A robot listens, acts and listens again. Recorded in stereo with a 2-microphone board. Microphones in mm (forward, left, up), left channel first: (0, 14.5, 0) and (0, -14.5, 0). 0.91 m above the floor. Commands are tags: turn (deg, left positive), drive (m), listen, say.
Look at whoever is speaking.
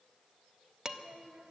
<turn deg="-75"/>
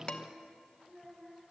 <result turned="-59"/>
<say>Facing the child speaking.</say>